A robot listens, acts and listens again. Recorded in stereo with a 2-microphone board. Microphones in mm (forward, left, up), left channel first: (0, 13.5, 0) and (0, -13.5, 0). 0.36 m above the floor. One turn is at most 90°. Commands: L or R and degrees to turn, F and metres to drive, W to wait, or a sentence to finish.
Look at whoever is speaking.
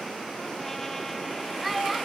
R30
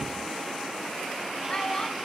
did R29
L20
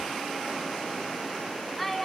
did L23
Found it: a child speaking, straight ahead, 2 to 4 m away.